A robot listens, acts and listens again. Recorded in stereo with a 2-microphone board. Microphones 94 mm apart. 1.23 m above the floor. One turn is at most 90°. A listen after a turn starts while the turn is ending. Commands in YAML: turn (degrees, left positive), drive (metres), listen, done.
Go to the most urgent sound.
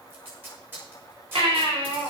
turn: -90
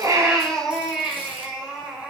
turn: -10
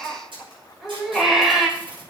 drive: 1.0
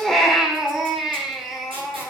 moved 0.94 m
drive: 1.0
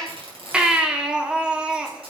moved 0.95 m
turn: -10
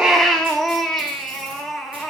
drive: 1.0
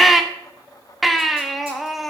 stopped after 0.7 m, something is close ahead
done: "I am next to the baby crying."